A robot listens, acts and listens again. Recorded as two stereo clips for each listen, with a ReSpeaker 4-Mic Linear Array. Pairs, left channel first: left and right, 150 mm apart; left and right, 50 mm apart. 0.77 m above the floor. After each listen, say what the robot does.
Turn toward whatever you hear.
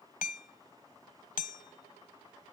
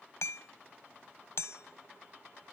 Turn 65° left.
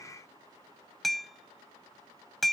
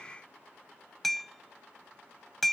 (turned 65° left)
Facing the hammering.